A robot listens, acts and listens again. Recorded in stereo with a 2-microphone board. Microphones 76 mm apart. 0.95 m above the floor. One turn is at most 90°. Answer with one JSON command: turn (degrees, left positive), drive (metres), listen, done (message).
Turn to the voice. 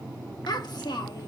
{"turn": 65}
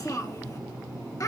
{"turn": 45}
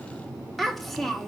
{"done": "Found it: a child speaking, straight ahead."}